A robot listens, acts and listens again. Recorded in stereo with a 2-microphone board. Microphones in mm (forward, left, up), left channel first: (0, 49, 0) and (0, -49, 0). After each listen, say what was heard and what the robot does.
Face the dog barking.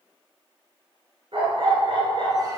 The dog barking: about 65° right or 115° right. Turn 65° right.
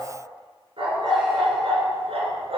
So it is at 75° right. Turn 75° right.
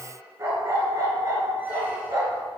The dog barking is now 35° right. Turn 35° right.
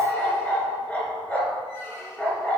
The dog barking is now 10° left. Turn 10° left.
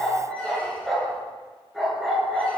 Facing the dog barking, 2 to 4 m away.